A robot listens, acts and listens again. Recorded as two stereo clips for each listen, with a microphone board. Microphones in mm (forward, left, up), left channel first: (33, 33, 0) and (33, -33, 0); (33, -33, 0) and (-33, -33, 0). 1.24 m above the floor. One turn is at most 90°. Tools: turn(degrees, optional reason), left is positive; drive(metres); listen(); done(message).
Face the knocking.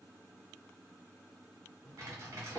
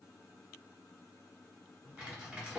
listen()
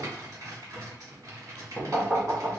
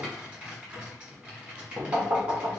turn(degrees=-90, reason="The knocking: 160° right.")
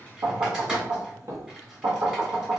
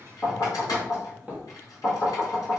turn(degrees=-60, reason="The knocking is now 60° right.")
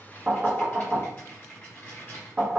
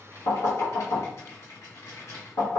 turn(degrees=-15, reason="The knocking is now 15° right.")
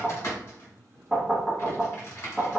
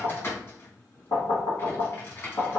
done("Facing the knocking.")